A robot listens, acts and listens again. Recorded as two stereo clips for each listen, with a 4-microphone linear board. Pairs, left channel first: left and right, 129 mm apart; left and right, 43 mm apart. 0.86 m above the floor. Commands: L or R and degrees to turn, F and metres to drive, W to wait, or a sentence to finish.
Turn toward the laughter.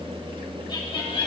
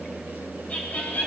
L45
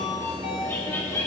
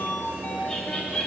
L20
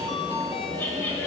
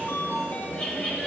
L25
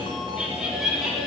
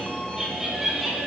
Facing the laughter.